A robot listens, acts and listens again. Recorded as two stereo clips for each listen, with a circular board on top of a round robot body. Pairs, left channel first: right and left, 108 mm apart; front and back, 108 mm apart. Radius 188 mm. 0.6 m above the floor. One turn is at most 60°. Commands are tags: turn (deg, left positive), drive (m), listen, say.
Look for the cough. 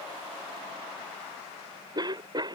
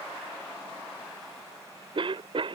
<turn deg="60"/>
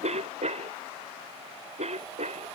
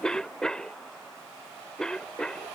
<turn deg="60"/>
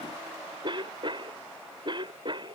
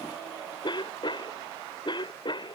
<turn deg="45"/>
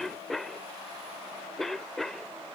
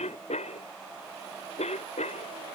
<say>Found it: a cough, straight ahead.</say>